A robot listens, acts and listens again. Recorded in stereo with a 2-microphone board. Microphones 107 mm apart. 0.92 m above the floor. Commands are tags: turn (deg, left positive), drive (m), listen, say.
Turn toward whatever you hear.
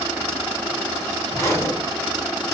<turn deg="25"/>
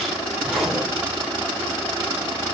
<say>Facing the zipper, 2 to 4 m away.</say>